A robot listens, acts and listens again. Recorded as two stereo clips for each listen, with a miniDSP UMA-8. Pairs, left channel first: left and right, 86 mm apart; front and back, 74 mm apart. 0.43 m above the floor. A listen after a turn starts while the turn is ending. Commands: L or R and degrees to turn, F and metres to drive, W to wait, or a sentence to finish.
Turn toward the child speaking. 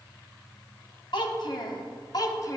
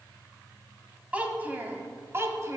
L135
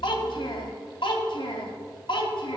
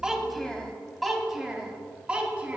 L110
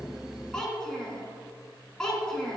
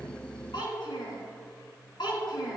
L10
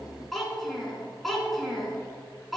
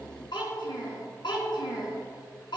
Facing the child speaking, 2 to 4 m away.